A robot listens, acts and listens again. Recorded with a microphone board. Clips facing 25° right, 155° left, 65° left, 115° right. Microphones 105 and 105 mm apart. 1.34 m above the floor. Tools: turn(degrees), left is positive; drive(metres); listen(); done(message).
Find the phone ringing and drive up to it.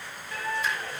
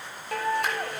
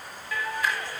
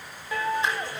listen()
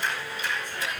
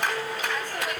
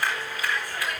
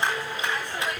listen()
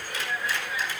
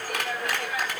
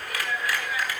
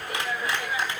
done("I can't make out a phone ringing to turn to.")